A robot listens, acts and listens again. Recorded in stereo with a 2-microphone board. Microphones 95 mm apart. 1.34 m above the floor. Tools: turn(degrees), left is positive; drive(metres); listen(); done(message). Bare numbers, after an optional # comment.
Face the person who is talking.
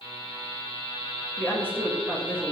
# The woman speaking: about 20° left or 160° left.
turn(20)
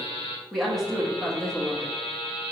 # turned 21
done("Facing the woman speaking.")